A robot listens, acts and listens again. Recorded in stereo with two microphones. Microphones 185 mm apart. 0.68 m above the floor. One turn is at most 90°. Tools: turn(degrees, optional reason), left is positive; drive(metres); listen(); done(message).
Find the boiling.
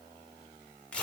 listen()
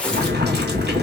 turn(degrees=-65, reason="The boiling: about 65° right or 115° right.")
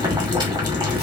turn(degrees=-25, reason="So it is at 25° right.")
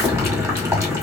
turn(degrees=-15, reason="The boiling is now 15° right.")
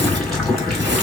done("Facing the boiling.")